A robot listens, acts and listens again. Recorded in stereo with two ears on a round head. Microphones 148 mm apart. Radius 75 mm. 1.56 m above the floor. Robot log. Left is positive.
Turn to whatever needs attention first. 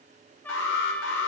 cmd yaw +90
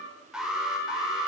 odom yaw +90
end: Facing the alarm.